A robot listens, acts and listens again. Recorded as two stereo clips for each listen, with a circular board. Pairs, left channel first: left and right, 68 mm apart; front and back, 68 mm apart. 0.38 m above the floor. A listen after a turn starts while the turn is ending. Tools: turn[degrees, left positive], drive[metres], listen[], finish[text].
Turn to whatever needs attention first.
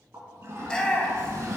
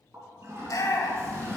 Thought: The shout: 15° left.
Action: turn[15]
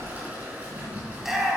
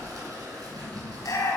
Action: finish[Facing the shout.]